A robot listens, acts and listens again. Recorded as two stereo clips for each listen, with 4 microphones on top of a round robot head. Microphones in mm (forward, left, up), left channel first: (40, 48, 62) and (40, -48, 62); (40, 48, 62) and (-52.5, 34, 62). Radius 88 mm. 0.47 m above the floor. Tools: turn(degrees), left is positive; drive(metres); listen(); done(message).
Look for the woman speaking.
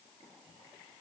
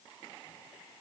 listen()
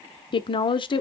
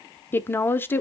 turn(degrees=75)
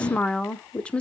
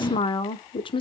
turn(degrees=15)
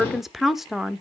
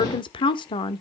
done("Facing the woman speaking.")